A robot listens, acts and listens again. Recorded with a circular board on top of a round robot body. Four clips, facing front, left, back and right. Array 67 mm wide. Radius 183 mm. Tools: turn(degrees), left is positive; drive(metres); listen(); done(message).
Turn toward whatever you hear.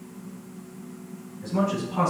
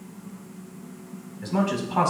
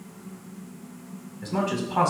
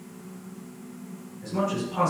turn(degrees=130)
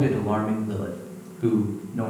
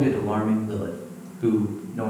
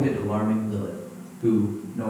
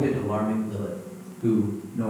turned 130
turn(degrees=55)
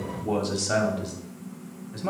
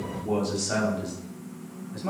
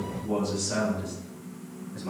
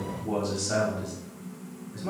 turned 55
turn(degrees=20)
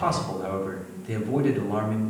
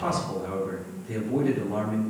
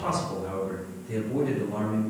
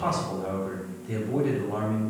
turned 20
done("Facing the man speaking, 2 to 4 m away.")